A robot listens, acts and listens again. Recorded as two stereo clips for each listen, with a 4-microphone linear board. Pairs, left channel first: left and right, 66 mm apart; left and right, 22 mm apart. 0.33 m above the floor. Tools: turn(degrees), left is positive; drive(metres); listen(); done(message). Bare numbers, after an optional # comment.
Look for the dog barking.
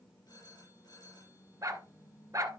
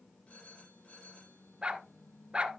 # The dog barking: about 55° right or 125° right.
turn(-55)
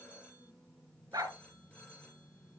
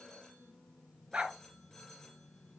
# So it is at 70° right.
turn(-70)
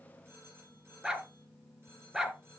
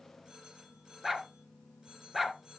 # The dog barking is now 10° right.
turn(-10)
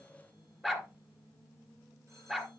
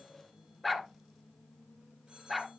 done("Facing the dog barking, 1 to 2 m away.")